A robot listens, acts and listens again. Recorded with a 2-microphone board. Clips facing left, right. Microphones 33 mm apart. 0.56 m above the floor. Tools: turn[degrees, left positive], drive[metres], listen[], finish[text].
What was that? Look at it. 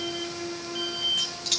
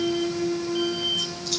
Thought: The keys jangling: about 65° left or 115° left.
Action: turn[65]
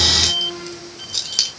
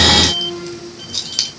Action: finish[Facing the keys jangling.]